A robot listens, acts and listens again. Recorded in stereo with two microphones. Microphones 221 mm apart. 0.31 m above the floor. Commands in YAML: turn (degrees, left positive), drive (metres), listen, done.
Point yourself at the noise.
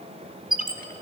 turn: -40
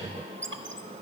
turn: -90
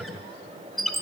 done: "Facing the squeak."